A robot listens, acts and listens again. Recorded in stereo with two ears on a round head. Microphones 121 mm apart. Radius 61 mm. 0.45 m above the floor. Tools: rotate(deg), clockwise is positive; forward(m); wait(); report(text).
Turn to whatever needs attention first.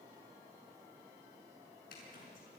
wait()
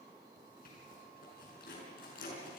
wait()
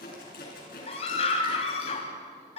rotate(-50)
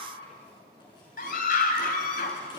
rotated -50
rotate(-75)
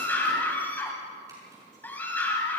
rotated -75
rotate(-15)
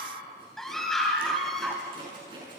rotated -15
report("Found it: a scream, straight ahead, 2 to 4 m away.")